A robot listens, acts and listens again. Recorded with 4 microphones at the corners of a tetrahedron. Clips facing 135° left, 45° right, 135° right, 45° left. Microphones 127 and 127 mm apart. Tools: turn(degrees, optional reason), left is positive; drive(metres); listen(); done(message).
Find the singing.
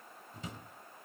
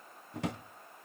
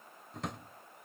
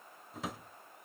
listen()
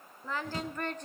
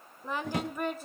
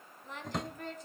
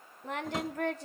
turn(degrees=40, reason="The singing: 40° left.")
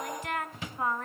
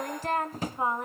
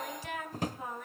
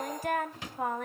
turn(degrees=25, reason="The singing is now 25° left.")
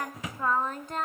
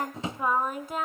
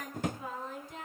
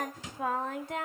turn(degrees=40, reason="The singing is now 40° left.")
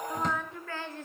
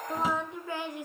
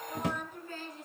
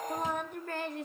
turn(degrees=30, reason="The singing is now 30° left.")
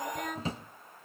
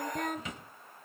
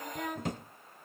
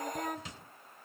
done("Facing the singing.")